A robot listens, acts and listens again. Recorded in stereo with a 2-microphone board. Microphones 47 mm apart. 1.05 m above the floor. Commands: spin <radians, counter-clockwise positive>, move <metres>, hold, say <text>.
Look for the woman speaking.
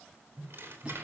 hold
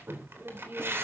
spin -0.87
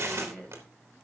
spin 0.35
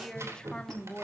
spin 0.52
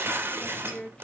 spin 0.35
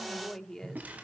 spin 0.26
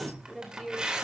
say Found it: a woman speaking, straight ahead, 2 to 4 m away.